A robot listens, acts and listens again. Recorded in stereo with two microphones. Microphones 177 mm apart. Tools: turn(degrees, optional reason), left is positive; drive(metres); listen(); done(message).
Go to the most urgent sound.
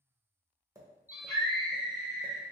turn(degrees=60, reason="The scream: about 60° left or 120° left.")
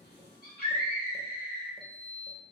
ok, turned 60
turn(degrees=60, reason="So it is at 60° left.")
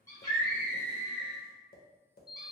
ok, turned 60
turn(degrees=20, reason="The scream is now 20° left.")
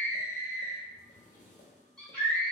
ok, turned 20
drive(metres=1.0)
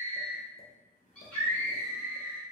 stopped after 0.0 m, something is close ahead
done("Something is in my way. I am facing the scream but have not reached it.")